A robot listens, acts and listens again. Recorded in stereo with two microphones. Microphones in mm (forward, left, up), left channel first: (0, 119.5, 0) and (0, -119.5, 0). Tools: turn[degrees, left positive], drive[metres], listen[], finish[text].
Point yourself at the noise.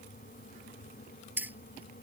Action: turn[-30]
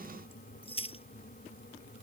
Thought: So it is at 25° left.
Action: turn[25]
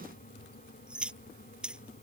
Action: finish[Found it: keys jangling, straight ahead.]